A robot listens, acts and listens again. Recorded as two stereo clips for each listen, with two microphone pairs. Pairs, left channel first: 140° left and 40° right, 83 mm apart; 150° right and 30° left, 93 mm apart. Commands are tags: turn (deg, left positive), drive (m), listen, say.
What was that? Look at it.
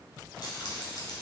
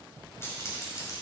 <turn deg="165"/>
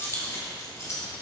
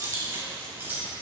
<turn deg="100"/>
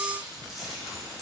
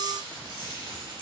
<turn deg="50"/>
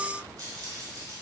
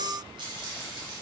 <say>Found it: keys jangling, straight ahead.</say>